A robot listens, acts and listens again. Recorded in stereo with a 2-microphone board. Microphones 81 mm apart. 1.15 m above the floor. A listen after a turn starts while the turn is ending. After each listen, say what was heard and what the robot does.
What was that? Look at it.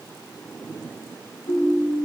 Turn 90° left.
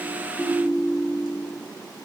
So it is at 10° right. Turn 10° right.
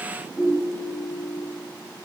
Found it: a ringtone, straight ahead, 2 to 4 m away.